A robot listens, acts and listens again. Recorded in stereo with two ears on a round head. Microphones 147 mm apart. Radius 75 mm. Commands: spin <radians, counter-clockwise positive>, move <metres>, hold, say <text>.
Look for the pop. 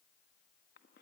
hold
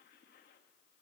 hold
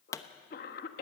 spin 0.35
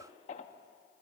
hold
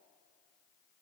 say I heard a pop, but can't make it out now. It was about straight ahead or 140° left.